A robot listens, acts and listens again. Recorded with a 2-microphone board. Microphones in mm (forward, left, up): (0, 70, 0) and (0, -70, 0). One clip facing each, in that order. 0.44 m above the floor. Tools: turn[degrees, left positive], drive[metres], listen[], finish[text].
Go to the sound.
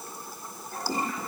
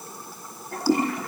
Thought: The toilet flushing: about 65° right or 115° right.
Action: turn[-65]
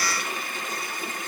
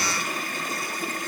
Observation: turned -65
Thought: So it is at 45° right.
Action: turn[-45]
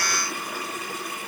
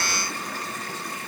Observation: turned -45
Action: drive[1.0]
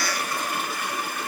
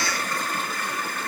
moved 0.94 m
Thought: The toilet flushing is now 10° left.
Action: turn[10]
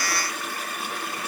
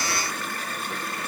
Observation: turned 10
Action: drive[1.0]
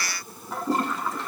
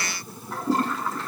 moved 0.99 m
Action: drive[1.0]
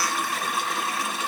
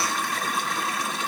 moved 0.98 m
Action: drive[1.0]
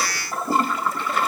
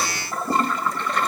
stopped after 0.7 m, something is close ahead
Action: finish[I am next to the toilet flushing.]